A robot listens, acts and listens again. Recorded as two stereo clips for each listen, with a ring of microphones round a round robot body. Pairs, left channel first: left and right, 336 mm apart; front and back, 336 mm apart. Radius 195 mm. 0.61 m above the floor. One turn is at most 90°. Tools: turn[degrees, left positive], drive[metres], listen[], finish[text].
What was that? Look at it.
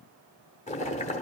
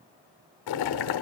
Thought: The boiling: 20° left.
Action: turn[20]
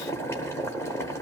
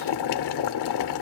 Action: finish[Facing the boiling.]